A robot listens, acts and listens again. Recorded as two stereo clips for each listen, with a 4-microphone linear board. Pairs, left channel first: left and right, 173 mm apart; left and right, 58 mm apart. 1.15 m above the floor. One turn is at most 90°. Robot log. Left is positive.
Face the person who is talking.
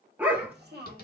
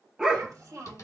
note: The child speaking: about 70° right or 110° right.
cmd yaw -70
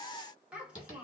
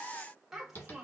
end: Facing the child speaking.